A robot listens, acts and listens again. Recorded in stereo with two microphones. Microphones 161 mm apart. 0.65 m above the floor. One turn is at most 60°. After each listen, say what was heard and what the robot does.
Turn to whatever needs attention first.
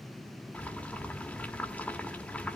Keep listening.
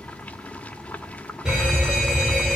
Turn 30° right.
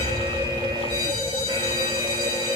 So it is at 145° right. Turn 60° right.
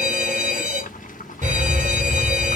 The fire alarm is now 65° right. Turn 60° right.
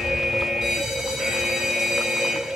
Facing the fire alarm.